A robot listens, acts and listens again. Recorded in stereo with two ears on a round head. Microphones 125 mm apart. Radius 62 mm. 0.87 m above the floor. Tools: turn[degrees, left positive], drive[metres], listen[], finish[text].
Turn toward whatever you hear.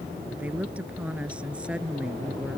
Action: turn[-30]
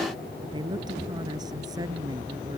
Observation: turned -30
Thought: So it is at 150° right.
Action: turn[-150]
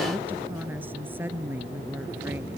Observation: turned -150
Thought: The woman speaking is now 15° right.
Action: turn[-15]
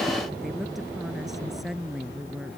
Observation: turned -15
Action: finish[Facing the woman speaking.]